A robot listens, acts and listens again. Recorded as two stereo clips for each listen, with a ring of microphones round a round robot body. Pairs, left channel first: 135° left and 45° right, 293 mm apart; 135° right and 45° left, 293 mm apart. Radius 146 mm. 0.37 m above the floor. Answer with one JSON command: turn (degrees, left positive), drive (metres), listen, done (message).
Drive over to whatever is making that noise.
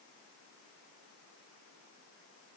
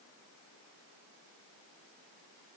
{"listen": true}
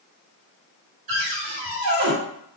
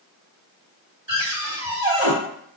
{"turn": -20}
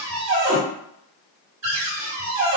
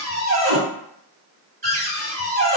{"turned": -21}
{"drive": 1.0}
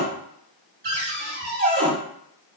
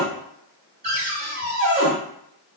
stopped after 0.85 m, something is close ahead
{"done": "Arrived at the cupboard door, straight ahead."}